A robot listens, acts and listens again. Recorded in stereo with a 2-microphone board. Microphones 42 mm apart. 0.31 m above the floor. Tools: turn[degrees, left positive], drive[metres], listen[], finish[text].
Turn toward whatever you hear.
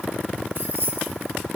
Thought: The keys jangling: about 55° right or 125° right.
Action: turn[-55]
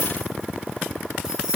Thought: So it is at 15° right.
Action: turn[-15]
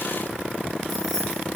Action: listen[]
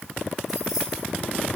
Action: finish[Facing the keys jangling, 2 to 4 m away.]